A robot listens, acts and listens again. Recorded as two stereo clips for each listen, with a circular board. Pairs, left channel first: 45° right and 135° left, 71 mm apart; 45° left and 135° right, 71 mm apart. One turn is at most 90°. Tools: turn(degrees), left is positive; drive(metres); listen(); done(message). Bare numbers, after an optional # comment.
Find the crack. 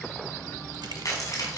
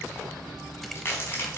# The crack: 10° right.
turn(-10)
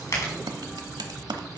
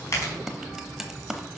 done("Found it: a crack, straight ahead.")